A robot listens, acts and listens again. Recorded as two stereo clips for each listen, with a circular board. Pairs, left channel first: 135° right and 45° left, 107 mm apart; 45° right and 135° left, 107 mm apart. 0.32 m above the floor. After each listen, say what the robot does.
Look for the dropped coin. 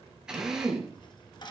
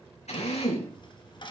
Turn 90° right.
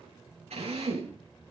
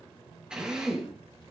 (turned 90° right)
I heard a dropped coin from this way, but can't make it out now.